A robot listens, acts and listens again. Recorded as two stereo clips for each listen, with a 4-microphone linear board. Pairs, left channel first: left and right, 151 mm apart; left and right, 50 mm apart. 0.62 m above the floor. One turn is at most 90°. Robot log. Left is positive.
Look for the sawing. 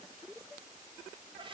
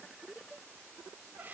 cmd idle
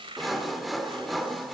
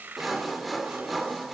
cmd yaw +30
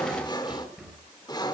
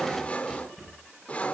note: So it is at 150° left.
cmd yaw +90
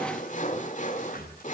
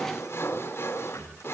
note: The sawing is now 65° left.
cmd yaw +65
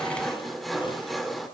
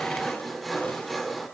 end: Found it: sawing, straight ahead, 1 to 2 m away.